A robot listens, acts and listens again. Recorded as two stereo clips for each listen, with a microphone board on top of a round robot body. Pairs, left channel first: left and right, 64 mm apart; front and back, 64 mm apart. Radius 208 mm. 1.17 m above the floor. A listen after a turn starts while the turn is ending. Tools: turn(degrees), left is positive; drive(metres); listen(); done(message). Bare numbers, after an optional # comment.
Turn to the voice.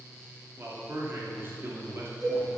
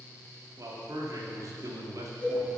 # The man speaking: 145° right.
turn(-145)
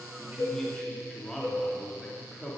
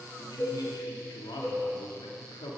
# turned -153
# The man speaking is now 10° left.
turn(10)
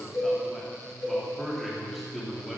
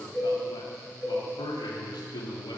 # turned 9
done("Facing the man speaking.")